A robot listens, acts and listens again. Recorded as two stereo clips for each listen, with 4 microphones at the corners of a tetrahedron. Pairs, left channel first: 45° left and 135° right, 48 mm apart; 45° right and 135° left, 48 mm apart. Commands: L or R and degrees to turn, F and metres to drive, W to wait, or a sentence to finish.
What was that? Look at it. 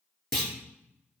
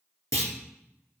R35
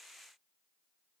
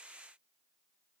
I heard a clunk from this way, but can't make it out now.